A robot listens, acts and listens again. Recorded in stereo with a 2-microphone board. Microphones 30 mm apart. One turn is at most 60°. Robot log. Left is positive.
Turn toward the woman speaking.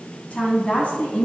note: The woman speaking: about 50° left or 130° left.
cmd yaw +50
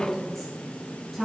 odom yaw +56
end: Facing the woman speaking.